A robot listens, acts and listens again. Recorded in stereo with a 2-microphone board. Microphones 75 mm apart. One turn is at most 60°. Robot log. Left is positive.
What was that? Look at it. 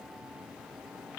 cmd idle
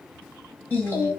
note: The singing: about 25° left or 155° left.
cmd yaw +25
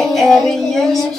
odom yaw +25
end: Found it: singing, straight ahead.